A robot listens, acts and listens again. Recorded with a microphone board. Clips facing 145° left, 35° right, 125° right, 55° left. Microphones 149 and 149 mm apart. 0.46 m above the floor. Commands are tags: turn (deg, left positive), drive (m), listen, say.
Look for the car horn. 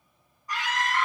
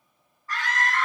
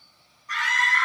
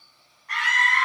<listen/>
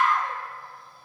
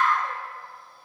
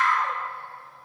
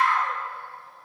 <listen/>
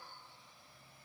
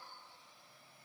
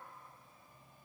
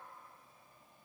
<say>I can't make out a car horn to turn to.</say>